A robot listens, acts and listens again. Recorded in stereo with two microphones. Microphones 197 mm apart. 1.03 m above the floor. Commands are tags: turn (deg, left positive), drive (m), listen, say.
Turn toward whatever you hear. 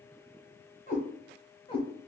<turn deg="25"/>
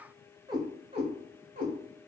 <turn deg="-45"/>
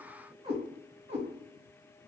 <turn deg="-40"/>
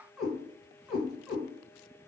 <say>Facing the cat meowing.</say>